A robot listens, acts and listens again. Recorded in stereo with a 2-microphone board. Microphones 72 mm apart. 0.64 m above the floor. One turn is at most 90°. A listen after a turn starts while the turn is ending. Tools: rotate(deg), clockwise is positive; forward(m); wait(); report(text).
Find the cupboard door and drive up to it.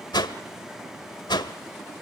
wait()
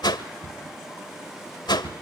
rotate(30)
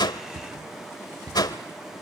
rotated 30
rotate(90)
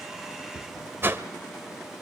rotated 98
rotate(20)
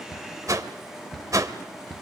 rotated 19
forward(1.0)
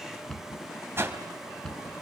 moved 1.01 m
forward(1.0)
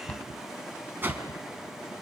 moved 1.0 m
rotate(-15)
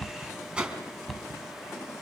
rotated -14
forward(1.0)
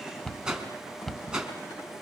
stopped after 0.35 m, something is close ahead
report("Arrived at the cupboard door, straight ahead.")